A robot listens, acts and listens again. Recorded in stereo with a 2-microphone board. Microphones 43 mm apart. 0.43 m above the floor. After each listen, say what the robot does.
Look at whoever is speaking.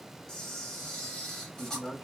Turn 60° left.
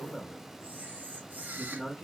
Turn 25° left.
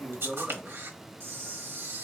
Turn 10° right.
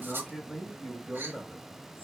Facing the man speaking, 2 to 4 m away.